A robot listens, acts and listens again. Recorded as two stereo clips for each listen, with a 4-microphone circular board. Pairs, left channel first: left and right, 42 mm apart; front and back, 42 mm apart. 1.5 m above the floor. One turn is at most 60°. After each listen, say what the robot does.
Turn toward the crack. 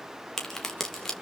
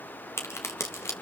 Found it: a crack, straight ahead, 2 to 4 m away.